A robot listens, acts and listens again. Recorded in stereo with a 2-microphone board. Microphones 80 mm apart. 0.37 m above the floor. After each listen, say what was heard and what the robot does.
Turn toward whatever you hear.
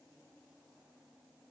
Keep listening.
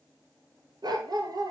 The dog barking: about 55° right or 125° right. Turn 55° right.
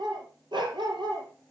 So it is at 80° right. Turn 80° right.
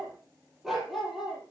Facing the dog barking, 2 to 4 m away.